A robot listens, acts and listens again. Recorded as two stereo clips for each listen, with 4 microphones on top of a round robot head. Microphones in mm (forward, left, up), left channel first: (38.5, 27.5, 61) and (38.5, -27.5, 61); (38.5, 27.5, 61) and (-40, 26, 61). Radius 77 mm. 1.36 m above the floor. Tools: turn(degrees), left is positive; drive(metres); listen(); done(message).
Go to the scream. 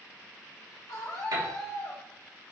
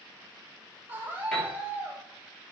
turn(degrees=115)
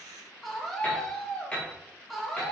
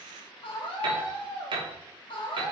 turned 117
drive(metres=1.0)
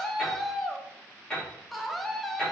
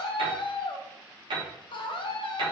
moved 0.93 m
drive(metres=1.0)
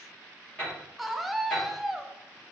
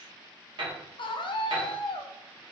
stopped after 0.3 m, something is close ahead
done("I am next to the scream.")